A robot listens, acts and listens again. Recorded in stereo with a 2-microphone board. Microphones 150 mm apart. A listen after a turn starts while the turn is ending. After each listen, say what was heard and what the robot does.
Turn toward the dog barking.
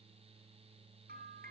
Keep listening.
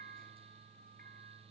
Keep listening.
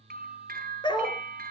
The dog barking: about 30° left or 150° left. Turn 30° left.
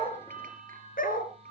So it is at 110° left. Turn 110° left.
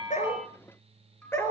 The dog barking is now 15° left. Turn 15° left.
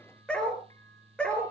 Found it: a dog barking, straight ahead, 2 to 4 m away.